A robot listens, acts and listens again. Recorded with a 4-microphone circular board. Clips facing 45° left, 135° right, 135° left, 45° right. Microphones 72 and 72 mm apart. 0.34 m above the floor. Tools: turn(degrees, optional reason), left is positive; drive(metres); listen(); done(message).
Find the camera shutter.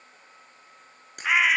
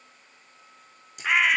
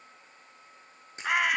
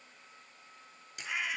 turn(degrees=75, reason="The camera shutter: 75° left.")
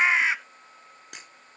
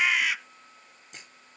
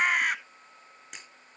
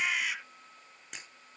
turn(degrees=45, reason="The camera shutter is now 45° left.")
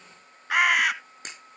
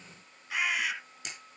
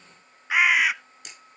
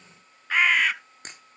done("Found it: a camera shutter, straight ahead.")